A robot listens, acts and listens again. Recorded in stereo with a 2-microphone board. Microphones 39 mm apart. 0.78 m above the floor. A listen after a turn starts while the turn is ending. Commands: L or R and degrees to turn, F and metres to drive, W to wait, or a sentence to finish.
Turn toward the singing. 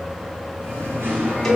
R90
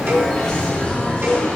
L15
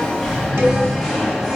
Found it: singing, straight ahead, over 4 m away.